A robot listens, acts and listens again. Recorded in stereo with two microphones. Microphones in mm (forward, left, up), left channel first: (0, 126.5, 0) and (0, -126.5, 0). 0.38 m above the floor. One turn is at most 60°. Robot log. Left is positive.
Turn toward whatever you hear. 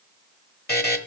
note: The buzzer: about 40° left or 140° left.
cmd yaw +40
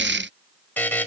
note: So it is at 10° left.
cmd yaw +10
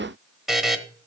end: Facing the buzzer, 1 to 2 m away.